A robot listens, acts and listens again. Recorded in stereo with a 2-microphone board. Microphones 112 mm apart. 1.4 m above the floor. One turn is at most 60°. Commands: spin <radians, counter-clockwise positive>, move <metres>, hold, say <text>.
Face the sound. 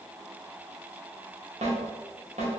spin -1.05
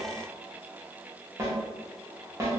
spin -0.44
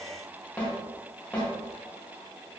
spin 0.17
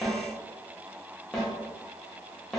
say Facing the snare drum.